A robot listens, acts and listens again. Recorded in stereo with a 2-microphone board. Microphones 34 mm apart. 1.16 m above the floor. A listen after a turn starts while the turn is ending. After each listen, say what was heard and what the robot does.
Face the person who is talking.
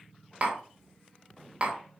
Keep listening.
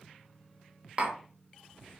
Keep listening.
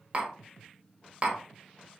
I can't make out anyone speaking to turn to.